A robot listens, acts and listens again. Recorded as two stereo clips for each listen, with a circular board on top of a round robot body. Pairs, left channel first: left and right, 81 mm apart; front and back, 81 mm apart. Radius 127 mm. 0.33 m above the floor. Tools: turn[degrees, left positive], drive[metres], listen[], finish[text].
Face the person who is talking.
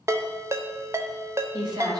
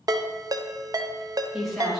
Thought: The woman speaking: 90° right.
Action: turn[-90]
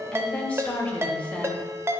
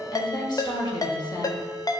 Thought: The woman speaking is now 15° left.
Action: turn[15]
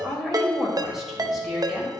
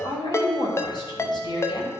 Action: finish[Facing the woman speaking, 2 to 4 m away.]